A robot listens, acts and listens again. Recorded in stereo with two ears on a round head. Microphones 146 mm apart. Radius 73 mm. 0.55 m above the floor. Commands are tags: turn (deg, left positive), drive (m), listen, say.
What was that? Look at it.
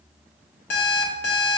<turn deg="90"/>
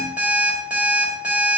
<turn deg="-10"/>
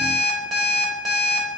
<say>Found it: an alarm clock, straight ahead, 1 to 2 m away.</say>